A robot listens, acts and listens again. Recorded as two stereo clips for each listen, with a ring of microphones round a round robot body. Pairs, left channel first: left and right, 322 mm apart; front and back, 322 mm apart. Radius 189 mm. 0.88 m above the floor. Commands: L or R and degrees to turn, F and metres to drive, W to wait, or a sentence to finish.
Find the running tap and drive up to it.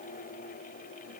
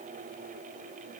W
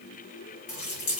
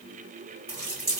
L110
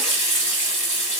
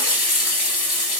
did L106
F1.0
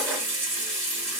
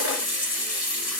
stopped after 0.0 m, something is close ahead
Something is in my way. I am facing the running tap but have not reached it.